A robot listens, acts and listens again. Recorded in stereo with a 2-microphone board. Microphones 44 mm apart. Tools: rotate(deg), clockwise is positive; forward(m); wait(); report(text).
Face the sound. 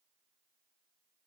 wait()
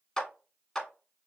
rotate(-30)
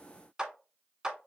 rotate(15)
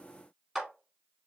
report("Found it: a clap, straight ahead, 1 to 2 m away.")